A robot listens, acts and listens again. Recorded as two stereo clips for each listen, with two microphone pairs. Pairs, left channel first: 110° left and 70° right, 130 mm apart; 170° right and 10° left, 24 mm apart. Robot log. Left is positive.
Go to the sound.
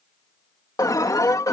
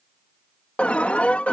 note: The alarm: 170° left.
cmd yaw +170
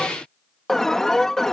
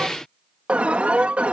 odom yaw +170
note: The alarm is now 25° left.
cmd yaw +25
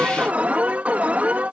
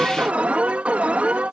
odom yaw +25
note: The alarm is now 10° left.
cmd yaw +10
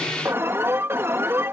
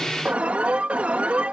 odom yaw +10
cmd fwd 1.0
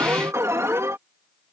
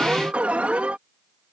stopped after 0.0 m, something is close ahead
end: Blocked. The alarm is further on, straight ahead.